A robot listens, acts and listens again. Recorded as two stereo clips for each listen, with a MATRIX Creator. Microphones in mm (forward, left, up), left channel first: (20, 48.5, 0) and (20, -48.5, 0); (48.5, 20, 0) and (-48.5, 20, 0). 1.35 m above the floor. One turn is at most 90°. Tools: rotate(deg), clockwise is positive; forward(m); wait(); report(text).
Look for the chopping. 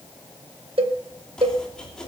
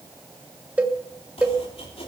report("Facing the chopping.")